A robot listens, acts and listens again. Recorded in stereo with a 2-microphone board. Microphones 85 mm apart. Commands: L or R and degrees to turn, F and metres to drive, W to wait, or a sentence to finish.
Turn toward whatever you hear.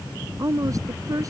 R40
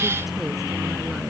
W
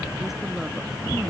W
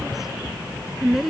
Facing the woman speaking.